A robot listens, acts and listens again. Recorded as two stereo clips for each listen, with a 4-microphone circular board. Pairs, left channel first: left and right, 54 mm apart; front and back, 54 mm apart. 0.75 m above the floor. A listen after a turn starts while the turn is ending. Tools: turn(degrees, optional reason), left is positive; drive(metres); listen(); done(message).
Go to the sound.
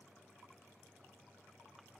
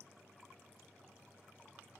listen()
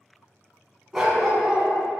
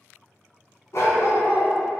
drive(metres=1.0)
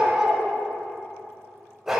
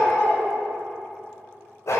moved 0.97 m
drive(metres=1.0)
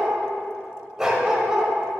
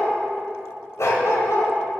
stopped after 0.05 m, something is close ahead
turn(degrees=-10, reason="The dog barking is now 10° right.")
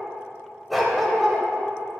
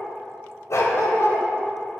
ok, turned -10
done("Arrived at the dog barking, straight ahead.")